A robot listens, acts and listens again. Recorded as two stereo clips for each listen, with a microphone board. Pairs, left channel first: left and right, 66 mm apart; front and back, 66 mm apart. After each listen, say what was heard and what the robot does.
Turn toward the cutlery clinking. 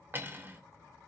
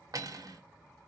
The cutlery clinking: 150° right. Turn 150° right.
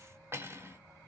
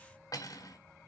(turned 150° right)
The cutlery clinking is now 35° right. Turn 35° right.
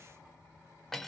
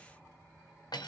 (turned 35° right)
Facing the cutlery clinking, under 1 m away.